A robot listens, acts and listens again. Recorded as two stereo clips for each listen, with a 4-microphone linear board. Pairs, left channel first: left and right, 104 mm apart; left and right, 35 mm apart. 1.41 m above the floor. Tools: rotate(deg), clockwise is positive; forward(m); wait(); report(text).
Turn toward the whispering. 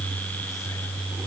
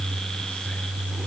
wait()
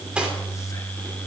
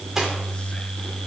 wait()
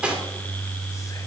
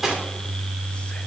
report("I can't make out whispering, only cutlery clinking.")